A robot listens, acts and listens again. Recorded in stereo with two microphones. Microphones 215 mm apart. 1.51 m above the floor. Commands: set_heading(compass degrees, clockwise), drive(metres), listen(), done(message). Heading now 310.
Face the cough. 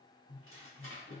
listen()
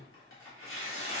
listen()
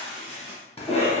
set_heading(280)
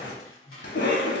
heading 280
set_heading(160)
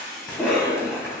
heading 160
done("Found it: a cough, straight ahead.")